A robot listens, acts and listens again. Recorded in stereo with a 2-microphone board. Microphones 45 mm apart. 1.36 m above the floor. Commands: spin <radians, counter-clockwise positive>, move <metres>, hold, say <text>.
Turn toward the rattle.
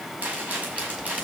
spin -0.61
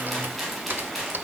say Found it: a rattle, straight ahead, over 4 m away.